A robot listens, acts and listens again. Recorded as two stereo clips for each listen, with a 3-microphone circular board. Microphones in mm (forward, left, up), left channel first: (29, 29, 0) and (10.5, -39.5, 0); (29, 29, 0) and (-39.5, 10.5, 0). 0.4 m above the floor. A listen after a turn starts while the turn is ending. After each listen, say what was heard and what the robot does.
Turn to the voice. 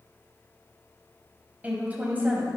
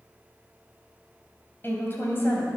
The woman speaking: 35° right. Turn 35° right.
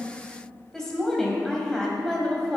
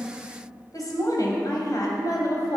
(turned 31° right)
Facing the woman speaking.